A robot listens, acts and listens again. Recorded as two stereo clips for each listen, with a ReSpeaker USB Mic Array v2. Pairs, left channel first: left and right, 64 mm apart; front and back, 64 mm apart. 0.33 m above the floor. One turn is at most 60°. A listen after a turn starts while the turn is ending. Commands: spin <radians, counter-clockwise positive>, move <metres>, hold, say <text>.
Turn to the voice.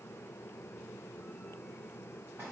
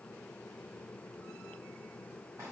hold
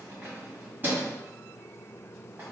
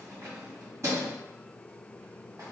hold
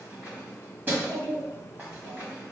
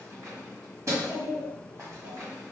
spin -1.05
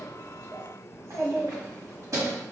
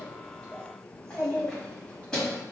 spin -1.05
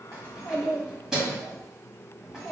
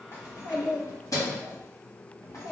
say Facing the child speaking, 2 to 4 m away.